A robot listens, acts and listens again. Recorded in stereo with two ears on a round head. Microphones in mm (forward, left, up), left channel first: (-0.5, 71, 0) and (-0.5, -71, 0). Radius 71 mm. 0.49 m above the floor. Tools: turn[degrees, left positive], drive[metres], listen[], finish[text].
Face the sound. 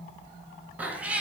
Action: turn[-30]
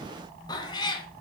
Thought: So it is at 30° left.
Action: turn[30]
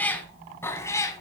Thought: The cat meowing is now 20° left.
Action: turn[20]
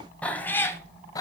Thought: The cat meowing is now 25° left.
Action: turn[25]
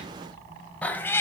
Thought: The cat meowing is now 15° left.
Action: turn[15]
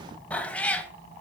Thought: The cat meowing is now 10° left.
Action: turn[10]
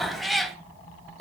Action: finish[Found it: a cat meowing, straight ahead.]